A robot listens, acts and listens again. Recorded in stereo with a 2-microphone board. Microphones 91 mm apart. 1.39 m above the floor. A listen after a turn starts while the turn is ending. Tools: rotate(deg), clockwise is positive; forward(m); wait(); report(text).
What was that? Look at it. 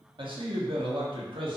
rotate(70)
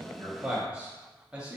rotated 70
rotate(15)
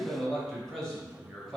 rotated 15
report("Facing the man speaking.")